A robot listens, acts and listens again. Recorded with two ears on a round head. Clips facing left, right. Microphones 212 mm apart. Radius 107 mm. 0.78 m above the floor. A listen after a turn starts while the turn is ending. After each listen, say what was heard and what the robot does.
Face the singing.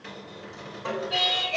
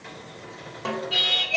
The singing: about 20° right or 160° right. Turn 20° right.
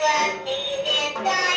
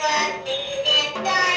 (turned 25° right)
So it is at 145° right. Turn 145° right.
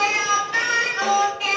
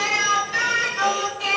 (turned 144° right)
Found it: singing, straight ahead, over 4 m away.